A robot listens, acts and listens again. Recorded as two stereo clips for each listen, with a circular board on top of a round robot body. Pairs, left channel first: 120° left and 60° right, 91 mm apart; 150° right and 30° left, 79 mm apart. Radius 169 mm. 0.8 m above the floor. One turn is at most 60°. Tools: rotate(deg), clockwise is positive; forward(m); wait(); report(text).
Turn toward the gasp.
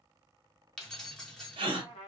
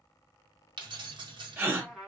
rotate(35)
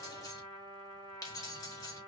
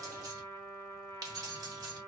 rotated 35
report("I heard a gasp from this way, but can't make it out now.")